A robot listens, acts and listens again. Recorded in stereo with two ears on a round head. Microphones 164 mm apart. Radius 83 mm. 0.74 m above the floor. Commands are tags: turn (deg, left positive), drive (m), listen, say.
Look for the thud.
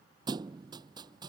<turn deg="-25"/>
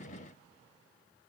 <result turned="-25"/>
<listen/>
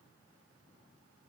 <say>I heard a thud, but can't make it out now. It was about straight ahead or 130° right.</say>